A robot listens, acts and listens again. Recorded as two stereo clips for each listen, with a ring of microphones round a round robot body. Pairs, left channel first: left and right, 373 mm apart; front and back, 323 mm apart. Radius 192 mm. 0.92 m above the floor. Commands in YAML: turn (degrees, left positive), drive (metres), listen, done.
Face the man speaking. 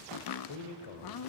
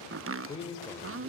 turn: 75
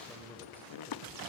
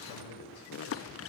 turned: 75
done: "Found it: a man speaking, straight ahead, 2 to 4 m away."